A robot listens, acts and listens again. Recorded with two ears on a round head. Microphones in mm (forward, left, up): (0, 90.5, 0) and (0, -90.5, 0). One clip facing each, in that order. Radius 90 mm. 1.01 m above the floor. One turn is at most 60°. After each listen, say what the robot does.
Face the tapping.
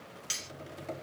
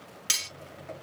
Turn 50° left.
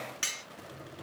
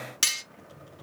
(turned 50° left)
Turn 60° left.
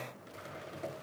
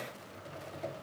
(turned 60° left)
Turn 15° left.
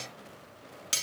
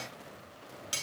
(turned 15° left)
Keep listening.
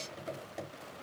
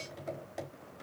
Found it: tapping, straight ahead, 2 to 4 m away.